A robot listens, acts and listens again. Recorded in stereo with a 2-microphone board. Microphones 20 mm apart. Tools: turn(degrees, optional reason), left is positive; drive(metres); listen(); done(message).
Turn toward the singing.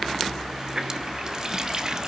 listen()
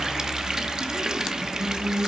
turn(degrees=-60, reason="The singing: about 60° right or 120° right.")
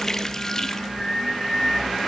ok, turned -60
turn(degrees=10, reason="So it is at 10° left.")
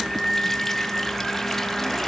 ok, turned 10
done("Found it: singing, straight ahead.")